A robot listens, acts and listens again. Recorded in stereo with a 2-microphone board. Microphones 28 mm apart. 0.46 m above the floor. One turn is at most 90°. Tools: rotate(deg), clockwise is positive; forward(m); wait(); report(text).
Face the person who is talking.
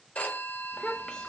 rotate(-25)
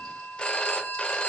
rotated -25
wait()
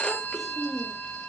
report("Found it: a child speaking, straight ahead.")